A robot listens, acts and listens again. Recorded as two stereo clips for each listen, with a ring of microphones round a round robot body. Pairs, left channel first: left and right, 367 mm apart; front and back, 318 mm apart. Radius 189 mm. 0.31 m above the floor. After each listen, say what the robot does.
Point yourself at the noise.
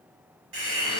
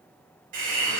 Turn 145° right.
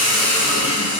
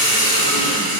Turn 10° right.
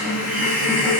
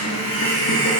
Found it: a hiss, straight ahead.